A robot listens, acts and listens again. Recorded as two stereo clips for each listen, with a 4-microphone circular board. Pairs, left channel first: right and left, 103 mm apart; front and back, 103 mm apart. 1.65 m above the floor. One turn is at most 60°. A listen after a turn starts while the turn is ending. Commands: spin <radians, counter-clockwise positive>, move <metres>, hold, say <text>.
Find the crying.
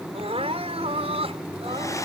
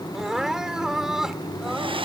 spin 1.05
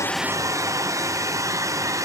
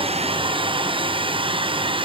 spin 0.61
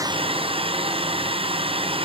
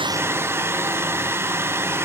hold
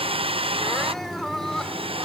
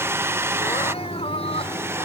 say Facing where the crying came from. I can't hear it now.